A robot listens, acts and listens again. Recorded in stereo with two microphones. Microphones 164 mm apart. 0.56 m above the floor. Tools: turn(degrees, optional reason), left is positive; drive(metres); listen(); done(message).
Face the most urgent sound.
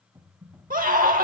turn(degrees=-55, reason="The scream: about 55° right or 125° right.")
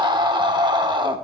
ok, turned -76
turn(degrees=-30, reason="So it is at 30° right.")
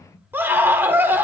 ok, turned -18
turn(degrees=-15, reason="The scream is now 15° right.")
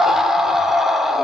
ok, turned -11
done("Facing the scream.")